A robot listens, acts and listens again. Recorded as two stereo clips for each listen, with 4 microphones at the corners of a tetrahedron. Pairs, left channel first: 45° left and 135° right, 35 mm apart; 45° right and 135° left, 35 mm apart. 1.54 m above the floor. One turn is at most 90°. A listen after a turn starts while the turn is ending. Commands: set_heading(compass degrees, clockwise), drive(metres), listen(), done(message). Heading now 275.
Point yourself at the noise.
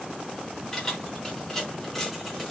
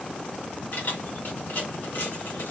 set_heading(315)
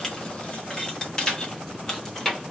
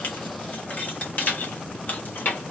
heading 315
set_heading(350)
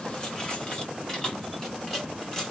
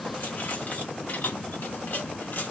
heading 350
set_heading(20)
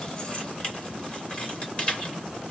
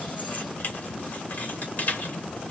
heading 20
set_heading(30)
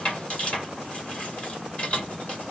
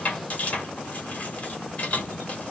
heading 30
done("Facing the keys jangling.")